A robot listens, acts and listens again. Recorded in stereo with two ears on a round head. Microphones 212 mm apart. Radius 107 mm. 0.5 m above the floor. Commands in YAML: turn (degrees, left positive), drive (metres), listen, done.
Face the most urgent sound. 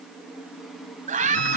turn: -35
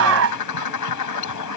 turn: -110
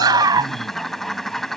turn: -20
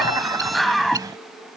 done: "Facing the scream."